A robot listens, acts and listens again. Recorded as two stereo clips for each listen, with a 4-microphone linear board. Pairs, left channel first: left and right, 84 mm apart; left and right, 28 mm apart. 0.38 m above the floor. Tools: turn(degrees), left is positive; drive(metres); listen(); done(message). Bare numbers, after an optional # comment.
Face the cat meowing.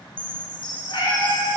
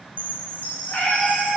# The cat meowing: about 60° left or 120° left.
turn(60)
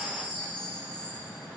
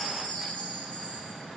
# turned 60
listen()
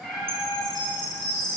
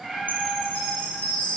done("Found it: a cat meowing, straight ahead, 2 to 4 m away.")